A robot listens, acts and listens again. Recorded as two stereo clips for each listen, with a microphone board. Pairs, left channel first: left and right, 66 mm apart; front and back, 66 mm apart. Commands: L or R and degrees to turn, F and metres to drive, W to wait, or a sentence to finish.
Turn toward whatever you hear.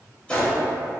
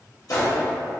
L20
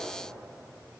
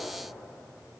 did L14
I heard a gunshot from this way, but can't make it out now.